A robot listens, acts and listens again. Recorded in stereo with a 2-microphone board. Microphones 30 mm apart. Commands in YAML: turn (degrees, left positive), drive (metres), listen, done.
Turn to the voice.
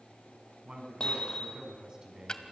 turn: -20
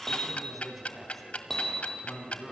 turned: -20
turn: 10
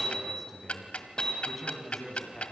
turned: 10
turn: 10
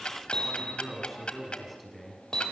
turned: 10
done: "Found it: a man speaking, straight ahead."